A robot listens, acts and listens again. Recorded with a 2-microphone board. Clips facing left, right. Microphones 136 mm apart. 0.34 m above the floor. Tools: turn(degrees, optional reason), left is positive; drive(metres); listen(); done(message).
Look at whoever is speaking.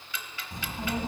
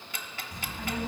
turn(degrees=30, reason="The child speaking: about 30° left or 150° left.")
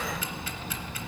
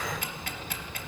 turn(degrees=120, reason="So it is at 120° left.")
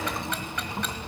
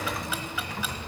turn(degrees=30, reason="The child speaking is now 30° left.")
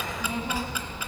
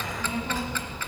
turn(degrees=10, reason="The child speaking is now 10° left.")
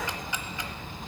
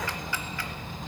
done("Found it: a child speaking, straight ahead, 1 to 2 m away.")